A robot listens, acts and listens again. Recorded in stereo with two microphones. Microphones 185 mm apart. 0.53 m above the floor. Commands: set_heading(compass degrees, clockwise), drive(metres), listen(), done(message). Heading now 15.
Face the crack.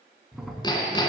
set_heading(345)
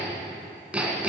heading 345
listen()
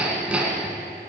done("I heard a crack, but can't make it out now. It was about 30° right or 150° left.")